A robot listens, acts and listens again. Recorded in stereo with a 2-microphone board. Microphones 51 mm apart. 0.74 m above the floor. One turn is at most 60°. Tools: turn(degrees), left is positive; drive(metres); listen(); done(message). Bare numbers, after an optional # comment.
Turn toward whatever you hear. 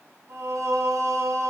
turn(-60)
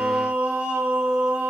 # So it is at 35° right.
turn(-35)
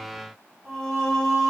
# The singing is now 10° left.
turn(10)
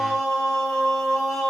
done("Found it: singing, straight ahead, 1 to 2 m away.")